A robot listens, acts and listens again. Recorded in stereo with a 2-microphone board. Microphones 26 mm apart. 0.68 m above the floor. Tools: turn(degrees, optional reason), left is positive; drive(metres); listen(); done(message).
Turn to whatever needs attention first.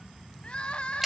turn(degrees=40, reason="The crying: about 40° left or 140° left.")
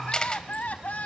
turn(degrees=90, reason="So it is at 90° left.")
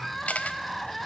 done("Found it: crying, straight ahead.")